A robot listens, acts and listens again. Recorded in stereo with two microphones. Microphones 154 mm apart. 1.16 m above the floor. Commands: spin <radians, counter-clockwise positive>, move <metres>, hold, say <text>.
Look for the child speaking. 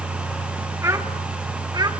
spin -0.52
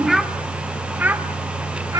spin -0.44
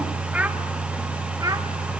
spin -0.44
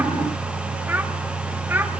spin -0.52
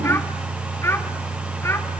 spin 0.26
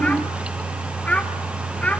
spin 0.17
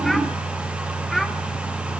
hold
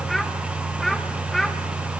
say Facing the child speaking, 1 to 2 m away.